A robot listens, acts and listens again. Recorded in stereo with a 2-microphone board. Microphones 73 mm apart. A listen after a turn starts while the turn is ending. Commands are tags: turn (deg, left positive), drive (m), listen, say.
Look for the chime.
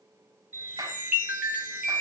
<turn deg="-20"/>
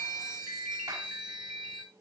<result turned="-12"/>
<turn deg="-10"/>
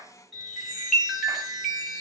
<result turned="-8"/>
<say>Facing the chime.</say>